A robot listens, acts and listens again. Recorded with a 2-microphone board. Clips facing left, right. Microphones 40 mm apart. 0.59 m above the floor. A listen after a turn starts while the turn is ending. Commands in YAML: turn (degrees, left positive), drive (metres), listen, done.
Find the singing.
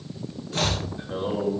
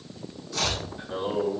turn: 30
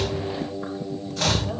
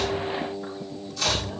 turn: 135
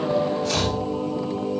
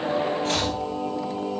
turn: -40
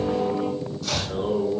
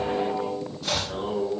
turn: -20
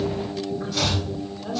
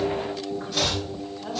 turn: -10
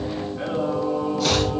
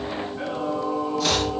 done: "Facing the singing, 2 to 4 m away."